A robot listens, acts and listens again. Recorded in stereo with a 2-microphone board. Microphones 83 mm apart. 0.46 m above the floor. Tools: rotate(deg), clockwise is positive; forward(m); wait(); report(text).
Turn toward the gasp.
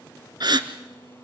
rotate(55)
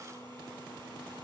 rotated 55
wait()
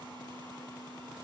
report("I heard a gasp, but can't make it out now. It was about straight ahead or 70° right.")